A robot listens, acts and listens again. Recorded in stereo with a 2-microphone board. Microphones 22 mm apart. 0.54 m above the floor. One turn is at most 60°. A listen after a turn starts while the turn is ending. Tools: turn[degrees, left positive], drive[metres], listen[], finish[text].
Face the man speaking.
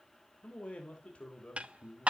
Thought: The man speaking: about 70° left or 110° left.
Action: turn[60]
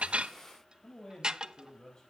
Thought: So it is at 30° left.
Action: turn[30]
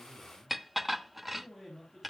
Action: finish[Facing the man speaking, over 4 m away.]